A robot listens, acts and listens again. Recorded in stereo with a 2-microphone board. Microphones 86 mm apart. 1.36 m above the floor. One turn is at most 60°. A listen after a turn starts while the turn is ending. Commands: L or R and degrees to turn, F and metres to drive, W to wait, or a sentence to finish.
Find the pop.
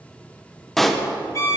L30
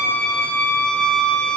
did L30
W
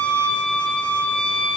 I heard a pop, but can't make it out now. It was about 25° right or 145° left.